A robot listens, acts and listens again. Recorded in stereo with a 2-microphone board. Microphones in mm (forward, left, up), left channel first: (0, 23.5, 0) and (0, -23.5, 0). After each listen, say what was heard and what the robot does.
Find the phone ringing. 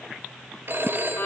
The phone ringing: about 55° right or 125° right. Turn 55° right.
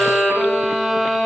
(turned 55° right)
Keep listening.
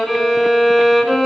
Keep listening.
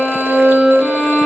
I heard a phone ringing, but can't make it out now. It was about straight ahead or 70° right.